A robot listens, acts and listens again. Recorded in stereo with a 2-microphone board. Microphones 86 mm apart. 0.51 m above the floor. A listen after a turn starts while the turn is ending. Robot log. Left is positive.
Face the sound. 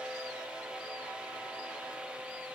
cmd idle
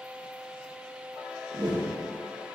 note: The whoosh: about 70° right or 110° right.
cmd yaw -70
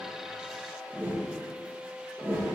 note: So it is at 35° right.
cmd yaw -35
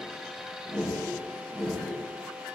end: Found it: a whoosh, straight ahead, 2 to 4 m away.